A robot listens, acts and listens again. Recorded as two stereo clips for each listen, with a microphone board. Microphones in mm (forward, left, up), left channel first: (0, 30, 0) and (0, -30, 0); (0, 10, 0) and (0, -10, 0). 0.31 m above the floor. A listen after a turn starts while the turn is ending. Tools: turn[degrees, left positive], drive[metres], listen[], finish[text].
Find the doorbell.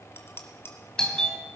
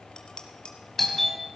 Action: turn[30]
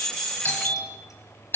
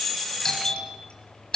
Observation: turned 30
Thought: So it is at 140° left.
Action: turn[140]
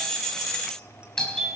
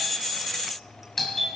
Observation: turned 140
Thought: The doorbell is now 15° left.
Action: turn[15]
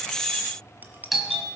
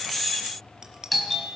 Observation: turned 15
Action: finish[Found it: a doorbell, straight ahead.]